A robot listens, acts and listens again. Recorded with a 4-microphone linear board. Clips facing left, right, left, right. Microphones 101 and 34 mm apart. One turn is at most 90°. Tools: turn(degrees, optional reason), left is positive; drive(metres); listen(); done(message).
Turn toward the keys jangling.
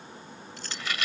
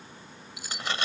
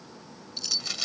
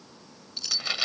turn(degrees=-30)
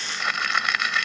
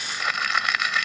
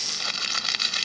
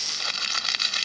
listen()
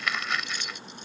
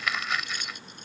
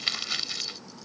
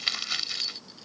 listen()
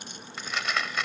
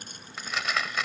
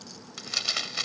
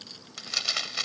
done("I heard keys jangling, but can't make it out now. It was about 20° left or 140° right.")